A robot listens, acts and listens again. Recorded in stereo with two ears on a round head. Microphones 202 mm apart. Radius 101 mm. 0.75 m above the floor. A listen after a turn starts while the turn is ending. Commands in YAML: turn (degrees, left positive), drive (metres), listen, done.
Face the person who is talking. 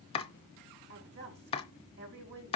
turn: -50
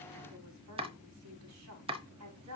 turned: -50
turn: -80
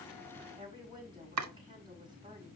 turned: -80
turn: -20
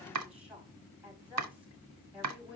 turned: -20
done: "Facing the woman speaking, over 4 m away."